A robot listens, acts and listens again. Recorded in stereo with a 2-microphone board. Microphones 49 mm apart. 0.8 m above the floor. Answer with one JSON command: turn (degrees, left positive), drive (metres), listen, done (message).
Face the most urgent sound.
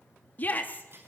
{"turn": 40}
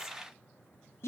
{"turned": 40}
{"turn": 100}
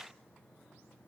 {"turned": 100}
{"listen": true}
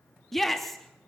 {"done": "Found it: a shout, straight ahead."}